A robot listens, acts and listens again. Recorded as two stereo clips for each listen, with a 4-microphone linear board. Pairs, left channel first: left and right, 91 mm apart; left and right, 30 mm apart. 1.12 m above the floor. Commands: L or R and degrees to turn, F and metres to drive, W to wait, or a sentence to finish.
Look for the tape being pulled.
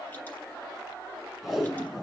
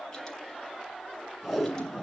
R30
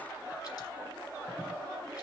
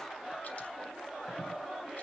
W
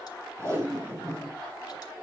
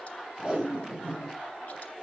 R150
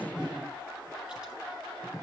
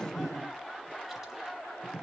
Found it: tape being pulled, straight ahead, over 4 m away.